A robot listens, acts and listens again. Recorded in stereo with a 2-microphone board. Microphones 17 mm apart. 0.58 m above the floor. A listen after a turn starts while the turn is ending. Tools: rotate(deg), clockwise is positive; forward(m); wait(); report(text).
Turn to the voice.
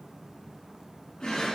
wait()
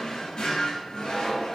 wait()
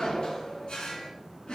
report("I can't make out anyone speaking, only a drawer.")